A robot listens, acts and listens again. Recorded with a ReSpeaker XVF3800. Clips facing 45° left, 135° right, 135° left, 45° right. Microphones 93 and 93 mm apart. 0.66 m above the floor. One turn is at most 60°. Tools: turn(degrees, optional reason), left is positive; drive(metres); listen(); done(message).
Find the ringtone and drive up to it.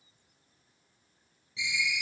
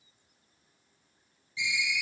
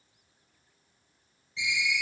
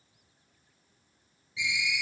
turn(degrees=40, reason="The ringtone: 40° left.")
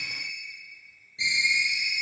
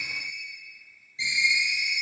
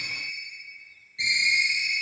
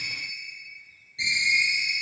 turn(degrees=25, reason="The ringtone is now 25° left.")
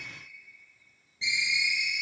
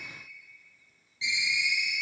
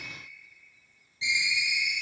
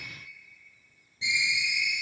drive(metres=1.0)
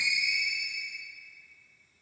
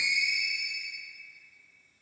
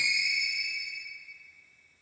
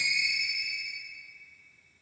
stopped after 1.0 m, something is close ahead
done("I am next to the ringtone.")